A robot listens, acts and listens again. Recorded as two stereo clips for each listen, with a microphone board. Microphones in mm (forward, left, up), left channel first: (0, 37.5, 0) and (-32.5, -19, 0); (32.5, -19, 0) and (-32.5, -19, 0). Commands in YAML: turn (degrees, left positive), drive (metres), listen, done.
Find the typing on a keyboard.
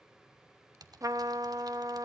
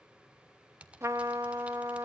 turn: -110
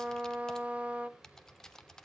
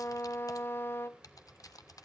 turn: -20
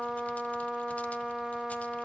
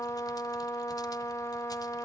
listen: true
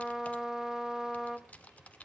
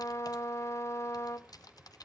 done: "Found it: typing on a keyboard, straight ahead, 1 to 2 m away."